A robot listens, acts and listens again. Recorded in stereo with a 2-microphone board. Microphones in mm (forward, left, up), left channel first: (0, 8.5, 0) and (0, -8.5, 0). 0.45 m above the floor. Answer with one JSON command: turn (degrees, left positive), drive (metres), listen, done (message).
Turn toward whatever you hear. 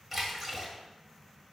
{"turn": -30}
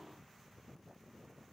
{"listen": true}
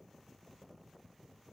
{"done": "I heard a splash, but can't make it out now. It was about 20° left or 140° right."}